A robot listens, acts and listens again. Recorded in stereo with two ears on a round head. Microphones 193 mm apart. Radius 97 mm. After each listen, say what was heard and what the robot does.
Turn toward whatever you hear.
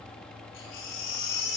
The baby crying: about 60° left or 120° left. Turn 60° left.
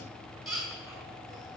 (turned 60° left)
Found it: a baby crying, straight ahead, over 4 m away.